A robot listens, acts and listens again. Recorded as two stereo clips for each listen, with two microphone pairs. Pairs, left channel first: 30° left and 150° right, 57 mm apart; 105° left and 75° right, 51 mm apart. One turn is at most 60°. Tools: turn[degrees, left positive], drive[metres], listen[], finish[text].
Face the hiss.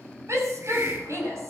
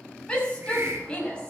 Thought: The hiss: 110° right.
Action: turn[-60]
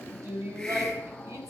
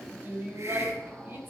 Thought: Nothing new. It was at 50° right.
Action: turn[-50]
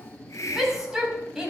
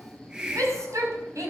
Action: finish[Facing the hiss, 2 to 4 m away.]